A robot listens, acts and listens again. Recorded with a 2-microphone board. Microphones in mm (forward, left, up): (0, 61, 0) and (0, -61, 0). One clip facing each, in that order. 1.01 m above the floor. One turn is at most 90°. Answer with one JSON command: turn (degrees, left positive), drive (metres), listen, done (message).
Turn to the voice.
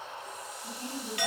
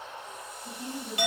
{"turn": 70}
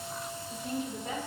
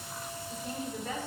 {"turn": 15}
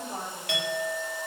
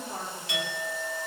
{"turn": 10}
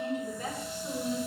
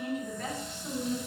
{"turn": 15}
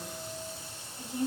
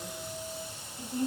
{"done": "Facing the woman speaking, 2 to 4 m away."}